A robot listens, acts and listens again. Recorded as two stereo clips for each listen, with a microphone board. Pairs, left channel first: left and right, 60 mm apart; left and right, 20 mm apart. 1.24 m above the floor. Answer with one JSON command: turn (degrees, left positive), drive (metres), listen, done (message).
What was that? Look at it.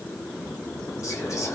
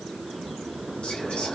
{"listen": true}
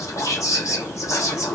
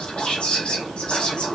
{"turn": 60}
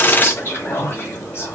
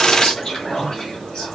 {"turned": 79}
{"turn": 45}
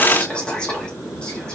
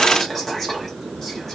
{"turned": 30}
{"turn": 15}
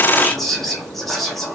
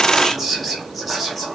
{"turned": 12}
{"done": "Facing the whispering, 1 to 2 m away."}